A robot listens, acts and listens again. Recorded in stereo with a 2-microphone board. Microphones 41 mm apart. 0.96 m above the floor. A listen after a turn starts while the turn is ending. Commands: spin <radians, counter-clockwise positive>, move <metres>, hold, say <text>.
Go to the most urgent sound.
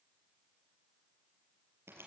hold
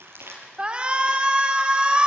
spin -0.44
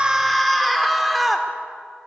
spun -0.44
move 1.0
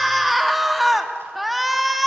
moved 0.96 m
move 1.0
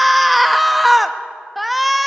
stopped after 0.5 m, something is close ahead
say Arrived at the shout, straight ahead.